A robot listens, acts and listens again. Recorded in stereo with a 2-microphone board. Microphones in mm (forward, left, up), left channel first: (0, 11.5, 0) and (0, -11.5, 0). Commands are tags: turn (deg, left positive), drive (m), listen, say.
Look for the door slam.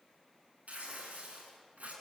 <listen/>
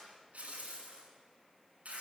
<listen/>
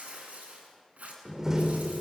<turn deg="-25"/>
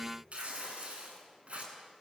<listen/>
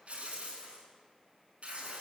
<say>I heard a door slam, but can't make it out now. It was about straight ahead or 130° right.</say>